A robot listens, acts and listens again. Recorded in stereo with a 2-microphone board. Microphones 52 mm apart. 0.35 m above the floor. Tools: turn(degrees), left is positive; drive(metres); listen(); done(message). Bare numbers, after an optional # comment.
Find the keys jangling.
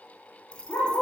# The keys jangling: about 20° left or 160° left.
turn(20)
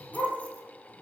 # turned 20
listen()
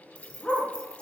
# The keys jangling: about 20° left or 160° left.
turn(20)
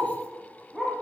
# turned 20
listen()
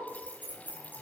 # The keys jangling: about 35° left or 145° left.
turn(35)
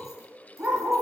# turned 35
listen()
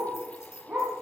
listen()
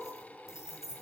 # So it is at 115° left.
turn(115)
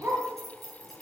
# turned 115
done("Facing the keys jangling.")